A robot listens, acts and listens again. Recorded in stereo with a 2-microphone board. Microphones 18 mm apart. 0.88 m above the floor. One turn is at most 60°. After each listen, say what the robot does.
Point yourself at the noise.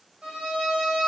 Turn 60° right.
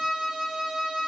Turn 35° right.
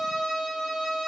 Turn 15° right.
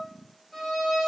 Found it: a violin, straight ahead.